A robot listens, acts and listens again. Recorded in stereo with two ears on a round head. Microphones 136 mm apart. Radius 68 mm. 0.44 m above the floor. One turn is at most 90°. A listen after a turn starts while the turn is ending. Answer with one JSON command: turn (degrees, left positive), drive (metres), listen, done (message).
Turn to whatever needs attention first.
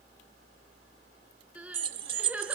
{"turn": -30}
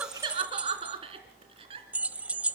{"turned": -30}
{"turn": -90}
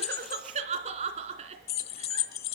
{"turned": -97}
{"turn": -45}
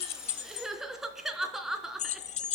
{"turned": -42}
{"done": "Facing the crying, 2 to 4 m away."}